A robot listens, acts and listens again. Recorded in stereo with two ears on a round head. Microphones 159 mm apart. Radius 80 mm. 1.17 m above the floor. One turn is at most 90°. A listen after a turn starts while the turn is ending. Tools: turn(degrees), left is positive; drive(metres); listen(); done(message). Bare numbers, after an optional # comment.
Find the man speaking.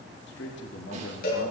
turn(90)
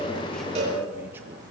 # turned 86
listen()
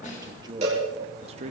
# The man speaking is now 40° right.
turn(-40)
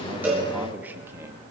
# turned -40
# The man speaking is now 15° right.
turn(-15)
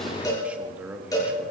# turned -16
# The man speaking is now 10° right.
turn(-10)
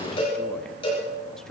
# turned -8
listen()
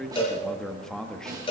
done("Facing the man speaking, 1 to 2 m away.")